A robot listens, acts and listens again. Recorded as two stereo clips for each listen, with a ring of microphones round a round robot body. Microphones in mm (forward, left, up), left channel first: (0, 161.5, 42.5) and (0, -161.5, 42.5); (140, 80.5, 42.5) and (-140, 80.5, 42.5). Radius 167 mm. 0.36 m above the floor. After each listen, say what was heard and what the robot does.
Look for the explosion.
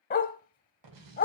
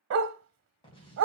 The explosion: 75° right. Turn 75° right.
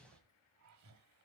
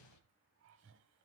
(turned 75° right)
Facing the explosion, 1 to 2 m away.